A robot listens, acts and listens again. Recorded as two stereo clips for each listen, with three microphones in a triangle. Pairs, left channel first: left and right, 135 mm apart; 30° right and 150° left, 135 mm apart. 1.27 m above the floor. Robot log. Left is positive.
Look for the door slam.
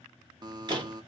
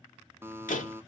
note: The door slam: 35° right.
cmd yaw -35
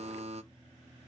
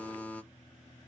end: I heard a door slam from this way, but can't make it out now.